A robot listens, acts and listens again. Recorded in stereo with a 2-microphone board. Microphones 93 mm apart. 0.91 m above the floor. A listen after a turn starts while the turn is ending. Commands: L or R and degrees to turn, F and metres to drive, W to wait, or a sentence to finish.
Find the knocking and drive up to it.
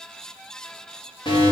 W
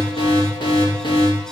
W
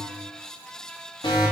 I can't make out knocking to turn to.